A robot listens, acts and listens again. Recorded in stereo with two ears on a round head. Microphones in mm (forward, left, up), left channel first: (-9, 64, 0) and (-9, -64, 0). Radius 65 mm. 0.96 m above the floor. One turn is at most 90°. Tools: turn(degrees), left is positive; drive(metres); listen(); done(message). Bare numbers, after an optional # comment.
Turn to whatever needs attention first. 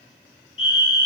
# The fire alarm: about 40° left or 140° left.
turn(40)
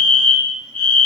# So it is at 10° left.
turn(10)
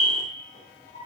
done("Found it: a fire alarm, straight ahead.")